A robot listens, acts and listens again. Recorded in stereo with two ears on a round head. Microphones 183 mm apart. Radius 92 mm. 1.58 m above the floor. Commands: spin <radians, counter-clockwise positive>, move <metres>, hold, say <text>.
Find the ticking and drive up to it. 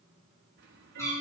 spin -1.05
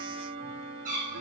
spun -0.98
spin -1.13
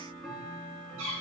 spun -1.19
move 1.0
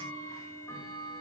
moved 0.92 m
spin 0.17
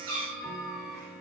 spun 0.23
move 1.0
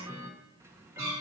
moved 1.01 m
spin -0.26
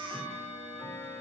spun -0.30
move 1.0
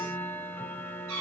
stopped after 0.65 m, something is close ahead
spin 0.17
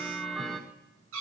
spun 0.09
say I am next to the ticking.